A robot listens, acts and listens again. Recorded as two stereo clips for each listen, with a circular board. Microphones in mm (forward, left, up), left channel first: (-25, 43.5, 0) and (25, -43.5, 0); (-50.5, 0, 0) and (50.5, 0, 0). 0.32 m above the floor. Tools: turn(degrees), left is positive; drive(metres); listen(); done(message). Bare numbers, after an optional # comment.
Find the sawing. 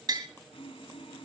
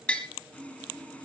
# The sawing: 105° left.
turn(105)
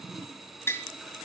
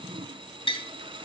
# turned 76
# The sawing is now 30° left.
turn(30)
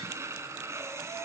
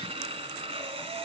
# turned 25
done("Found it: sawing, straight ahead, 1 to 2 m away.")